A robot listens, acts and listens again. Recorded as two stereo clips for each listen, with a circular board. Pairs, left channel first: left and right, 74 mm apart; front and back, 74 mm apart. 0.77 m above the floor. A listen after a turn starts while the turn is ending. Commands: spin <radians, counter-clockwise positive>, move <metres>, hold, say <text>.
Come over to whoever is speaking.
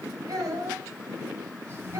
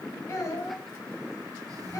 spin -0.87
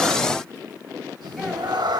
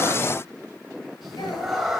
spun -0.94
hold
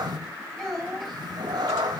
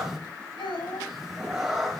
move 1.0
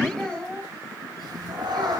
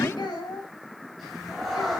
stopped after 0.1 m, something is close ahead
spin 0.17
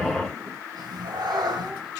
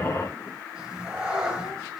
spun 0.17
hold
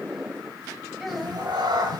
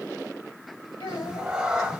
say Blocked. The child speaking is further on, straight ahead.